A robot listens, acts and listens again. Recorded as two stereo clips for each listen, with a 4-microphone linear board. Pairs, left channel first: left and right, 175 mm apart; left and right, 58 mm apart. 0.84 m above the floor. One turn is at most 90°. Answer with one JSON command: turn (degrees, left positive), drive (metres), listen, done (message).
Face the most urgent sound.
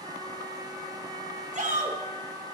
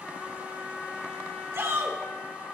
{"turn": -50}
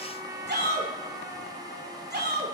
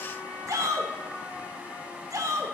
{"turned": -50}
{"turn": -80}
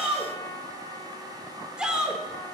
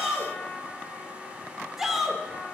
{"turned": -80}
{"done": "Facing the shout, 2 to 4 m away."}